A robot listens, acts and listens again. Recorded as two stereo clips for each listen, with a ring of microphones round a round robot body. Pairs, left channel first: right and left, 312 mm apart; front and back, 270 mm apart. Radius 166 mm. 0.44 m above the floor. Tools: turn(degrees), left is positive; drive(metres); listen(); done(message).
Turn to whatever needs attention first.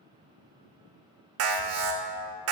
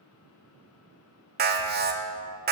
turn(degrees=130)
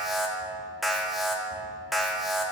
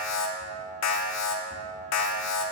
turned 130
done("Found it: an alarm, straight ahead, 1 to 2 m away.")